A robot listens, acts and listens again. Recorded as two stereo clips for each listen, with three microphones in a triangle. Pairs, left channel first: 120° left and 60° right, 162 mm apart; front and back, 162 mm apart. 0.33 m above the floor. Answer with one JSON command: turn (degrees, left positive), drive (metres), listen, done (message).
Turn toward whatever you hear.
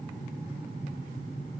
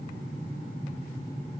{"listen": true}
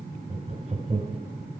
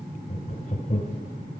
{"turn": -25}
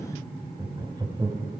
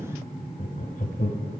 {"done": "Facing the laughter."}